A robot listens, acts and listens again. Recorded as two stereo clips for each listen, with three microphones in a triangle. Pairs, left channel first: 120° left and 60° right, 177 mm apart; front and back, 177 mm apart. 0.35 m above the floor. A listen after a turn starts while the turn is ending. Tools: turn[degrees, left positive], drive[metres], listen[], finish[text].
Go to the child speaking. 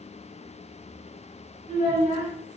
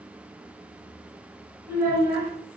Thought: The child speaking: 110° right.
Action: turn[-110]
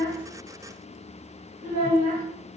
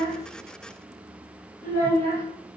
Thought: The child speaking is now 30° right.
Action: turn[-30]
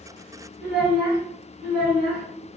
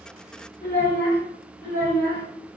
Action: drive[1.0]
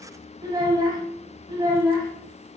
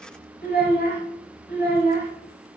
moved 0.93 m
Action: drive[1.0]
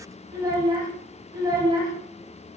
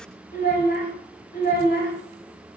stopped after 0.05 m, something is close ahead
Action: finish[Arrived at the child speaking, straight ahead.]